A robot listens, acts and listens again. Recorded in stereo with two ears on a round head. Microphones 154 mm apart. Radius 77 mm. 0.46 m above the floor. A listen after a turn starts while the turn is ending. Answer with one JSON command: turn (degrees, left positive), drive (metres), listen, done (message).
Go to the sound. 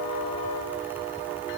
{"listen": true}
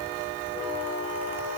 {"listen": true}
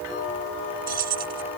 {"turn": -55}
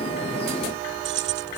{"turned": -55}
{"turn": -70}
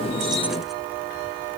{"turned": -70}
{"listen": true}
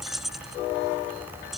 {"drive": 1.0}
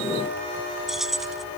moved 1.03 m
{"drive": 1.0}
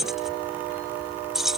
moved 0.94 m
{"drive": 1.0}
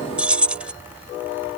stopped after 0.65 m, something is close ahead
{"done": "Arrived at the keys jangling, straight ahead."}